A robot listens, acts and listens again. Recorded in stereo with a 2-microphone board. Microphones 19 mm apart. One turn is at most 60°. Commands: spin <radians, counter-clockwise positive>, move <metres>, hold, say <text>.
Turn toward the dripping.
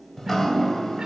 spin 0.44
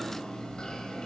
spin 1.05
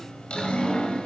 spin 1.05
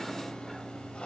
spin 1.05
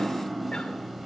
say Found it: dripping, straight ahead.